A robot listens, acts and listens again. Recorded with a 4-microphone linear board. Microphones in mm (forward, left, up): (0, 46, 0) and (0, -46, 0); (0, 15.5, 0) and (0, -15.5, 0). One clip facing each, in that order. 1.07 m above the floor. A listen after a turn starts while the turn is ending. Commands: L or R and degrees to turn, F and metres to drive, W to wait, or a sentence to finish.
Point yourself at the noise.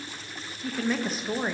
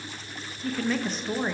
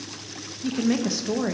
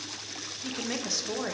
L30
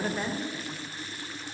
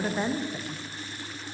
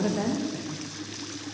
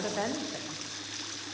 R25
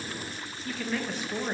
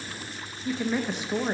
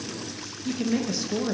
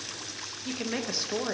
R20
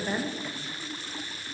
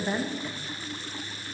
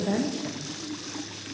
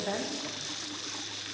Found it: a woman speaking, straight ahead.